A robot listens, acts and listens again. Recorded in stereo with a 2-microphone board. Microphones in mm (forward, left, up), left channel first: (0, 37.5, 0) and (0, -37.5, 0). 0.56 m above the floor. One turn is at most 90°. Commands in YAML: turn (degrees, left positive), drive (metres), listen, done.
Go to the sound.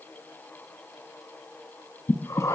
turn: 45
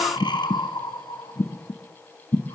turn: 90
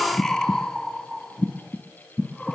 drive: 1.0
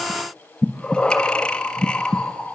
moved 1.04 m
turn: 10
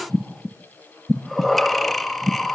drive: 1.0
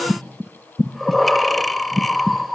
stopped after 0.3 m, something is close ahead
done: "I am next to the breathing."